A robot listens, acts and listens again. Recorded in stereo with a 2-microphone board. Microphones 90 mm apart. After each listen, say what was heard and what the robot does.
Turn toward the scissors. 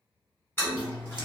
The scissors: about 55° right or 125° right. Turn 55° right.
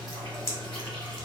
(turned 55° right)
So it is at 55° right. Turn 55° right.
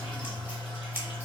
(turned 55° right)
The scissors is now 25° right. Turn 25° right.
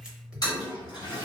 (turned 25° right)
The scissors is now 10° right. Turn 10° right.
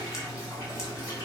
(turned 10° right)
Keep listening.
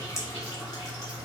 Facing the scissors.